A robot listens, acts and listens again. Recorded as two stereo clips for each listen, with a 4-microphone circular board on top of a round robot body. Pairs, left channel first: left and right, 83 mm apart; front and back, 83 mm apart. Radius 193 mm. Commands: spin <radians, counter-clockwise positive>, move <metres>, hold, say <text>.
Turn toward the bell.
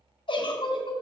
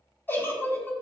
hold
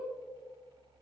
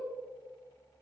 hold
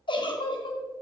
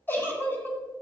say I can't make out a bell to turn to.